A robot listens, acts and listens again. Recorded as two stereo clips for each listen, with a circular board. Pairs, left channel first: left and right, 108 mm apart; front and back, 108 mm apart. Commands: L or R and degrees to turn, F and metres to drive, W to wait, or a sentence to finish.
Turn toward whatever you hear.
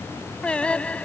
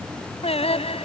L10
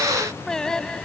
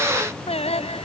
Found it: singing, straight ahead.